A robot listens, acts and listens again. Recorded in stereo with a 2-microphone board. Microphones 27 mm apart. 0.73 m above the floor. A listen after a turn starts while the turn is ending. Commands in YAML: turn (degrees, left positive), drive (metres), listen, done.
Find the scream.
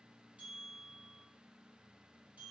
listen: true
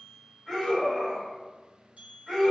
turn: 30
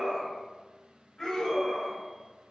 turn: 155
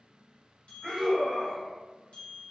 turn: -25
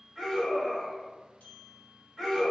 done: "Found it: a scream, straight ahead."